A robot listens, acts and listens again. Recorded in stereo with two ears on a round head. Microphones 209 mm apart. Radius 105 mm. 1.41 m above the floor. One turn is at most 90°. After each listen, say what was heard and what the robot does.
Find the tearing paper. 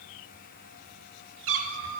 Keep listening.
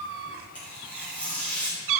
Turn 30° left.
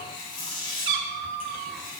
So it is at 145° left. Turn 90° left.
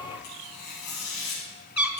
The tearing paper is now 90° left. Turn 90° left.
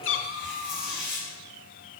Facing the tearing paper.